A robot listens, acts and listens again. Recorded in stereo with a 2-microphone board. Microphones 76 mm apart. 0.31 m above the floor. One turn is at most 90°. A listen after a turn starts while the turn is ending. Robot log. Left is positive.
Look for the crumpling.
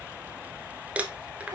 note: The crumpling: about 20° right or 160° right.
cmd yaw -20
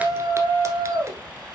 cmd idle
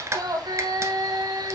note: So it is at 140° right.
cmd yaw -90
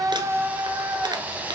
note: Nothing new. It was at 50° right.
cmd yaw -50
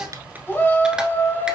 cmd idle
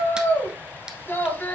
end: I heard crumpling from this way, but can't make it out now.